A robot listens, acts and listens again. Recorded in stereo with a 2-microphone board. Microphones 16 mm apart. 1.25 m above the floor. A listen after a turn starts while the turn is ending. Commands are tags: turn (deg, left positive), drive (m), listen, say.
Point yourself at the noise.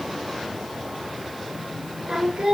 <turn deg="-75"/>
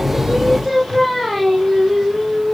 <turn deg="-15"/>
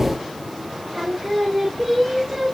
<turn deg="-15"/>
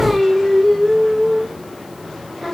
<say>Facing the singing.</say>